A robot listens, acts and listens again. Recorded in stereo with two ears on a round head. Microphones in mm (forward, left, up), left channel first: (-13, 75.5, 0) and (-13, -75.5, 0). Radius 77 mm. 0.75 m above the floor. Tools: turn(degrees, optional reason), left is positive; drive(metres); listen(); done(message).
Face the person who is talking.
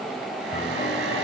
listen()
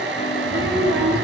turn(degrees=-70, reason="The child speaking: about 70° right or 110° right.")
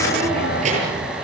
turn(degrees=-40, reason="So it is at 40° right.")
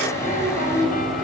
turn(degrees=-20, reason="The child speaking is now 20° right.")
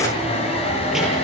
listen()
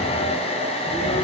listen()
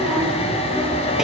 done("Facing the child speaking, over 4 m away.")